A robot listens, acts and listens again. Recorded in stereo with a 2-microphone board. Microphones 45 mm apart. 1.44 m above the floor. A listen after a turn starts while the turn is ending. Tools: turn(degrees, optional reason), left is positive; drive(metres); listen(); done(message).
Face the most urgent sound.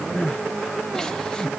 turn(degrees=30)
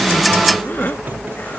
turn(degrees=135, reason="So it is at 135° left.")
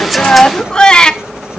turn(degrees=15, reason="The crying is now 15° left.")
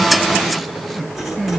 done("Found it: crying, straight ahead, 1 to 2 m away.")